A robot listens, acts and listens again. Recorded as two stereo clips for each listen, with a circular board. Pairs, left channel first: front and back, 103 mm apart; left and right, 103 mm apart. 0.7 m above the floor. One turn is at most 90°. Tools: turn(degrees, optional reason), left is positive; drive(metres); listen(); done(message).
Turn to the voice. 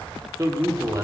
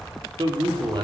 turn(degrees=-90, reason="The man speaking: 125° right.")
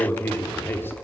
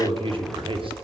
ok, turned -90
turn(degrees=-65, reason="The man speaking is now 65° right.")
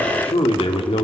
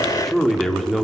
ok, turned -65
done("Found it: a man speaking, straight ahead, 1 to 2 m away.")